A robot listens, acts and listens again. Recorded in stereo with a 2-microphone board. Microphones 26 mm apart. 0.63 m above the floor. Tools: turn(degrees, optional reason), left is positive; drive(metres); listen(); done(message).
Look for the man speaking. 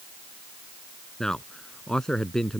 turn(degrees=15, reason="The man speaking: about 15° left or 165° left.")
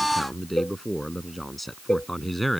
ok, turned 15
turn(degrees=30)
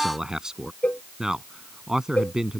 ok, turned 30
turn(degrees=-30, reason="So it is at 30° right.")
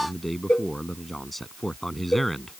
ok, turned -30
done("Found it: a man speaking, straight ahead.")